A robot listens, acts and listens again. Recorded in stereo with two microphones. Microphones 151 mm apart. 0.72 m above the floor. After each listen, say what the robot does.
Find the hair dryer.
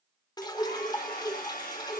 Turn 75° left.
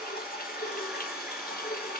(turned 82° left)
Found it: a hair dryer, straight ahead, over 4 m away.